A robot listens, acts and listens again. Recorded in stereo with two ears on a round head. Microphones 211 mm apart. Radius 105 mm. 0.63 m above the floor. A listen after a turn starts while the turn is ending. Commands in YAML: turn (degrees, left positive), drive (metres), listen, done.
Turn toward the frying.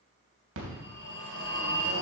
listen: true
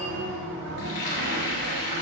turn: 50
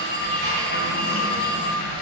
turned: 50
turn: 70
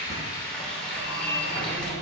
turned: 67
done: "Facing the frying, 2 to 4 m away."